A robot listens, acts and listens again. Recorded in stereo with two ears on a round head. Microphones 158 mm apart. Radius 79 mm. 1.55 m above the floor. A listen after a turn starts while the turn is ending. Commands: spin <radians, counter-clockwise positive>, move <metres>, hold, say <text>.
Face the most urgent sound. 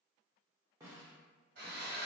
hold
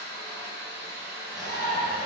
spin -0.35
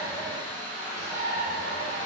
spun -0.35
spin -2.36
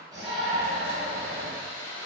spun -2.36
spin 0.17
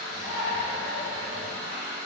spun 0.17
say Found it: a shout, straight ahead.